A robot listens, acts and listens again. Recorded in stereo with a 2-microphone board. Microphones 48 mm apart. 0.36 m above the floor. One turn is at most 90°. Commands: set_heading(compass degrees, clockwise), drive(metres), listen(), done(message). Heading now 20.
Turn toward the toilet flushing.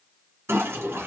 set_heading(85)
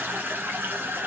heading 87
set_heading(132)
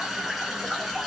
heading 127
done("Facing the toilet flushing.")